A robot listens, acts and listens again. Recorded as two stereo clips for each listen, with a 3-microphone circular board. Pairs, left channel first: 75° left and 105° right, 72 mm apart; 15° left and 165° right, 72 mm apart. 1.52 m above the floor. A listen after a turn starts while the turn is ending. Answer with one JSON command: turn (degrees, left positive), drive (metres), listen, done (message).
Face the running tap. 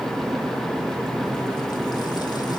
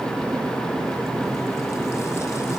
{"listen": true}
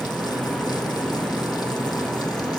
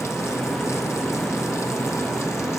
{"listen": true}
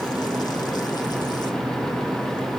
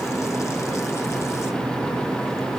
{"done": "I can't make out a running tap to turn to."}